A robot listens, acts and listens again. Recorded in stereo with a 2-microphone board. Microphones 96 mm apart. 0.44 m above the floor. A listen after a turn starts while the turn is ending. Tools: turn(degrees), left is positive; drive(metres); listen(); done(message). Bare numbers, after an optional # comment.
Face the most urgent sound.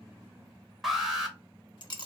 turn(30)
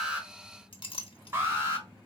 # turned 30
# So it is at 30° right.
turn(-30)
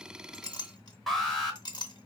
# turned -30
done("Facing the alarm.")